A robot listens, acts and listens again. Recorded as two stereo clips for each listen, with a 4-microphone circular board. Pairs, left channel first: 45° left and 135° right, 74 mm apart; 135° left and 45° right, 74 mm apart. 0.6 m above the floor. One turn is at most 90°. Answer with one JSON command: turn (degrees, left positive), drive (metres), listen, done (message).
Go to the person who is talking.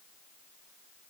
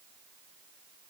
{"listen": true}
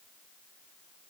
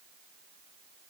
{"listen": true}
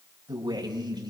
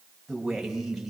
{"turn": -90}
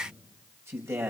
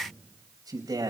{"turn": -80}
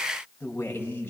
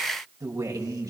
{"turn": -15}
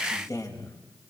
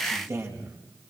{"drive": 1.0}
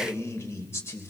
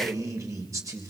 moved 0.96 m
{"drive": 1.0}
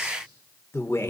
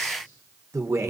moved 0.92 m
{"drive": 1.0}
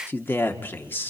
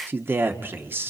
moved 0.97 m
{"drive": 1.0}
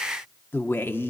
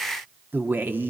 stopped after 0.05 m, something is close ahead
{"done": "I am next to the man speaking."}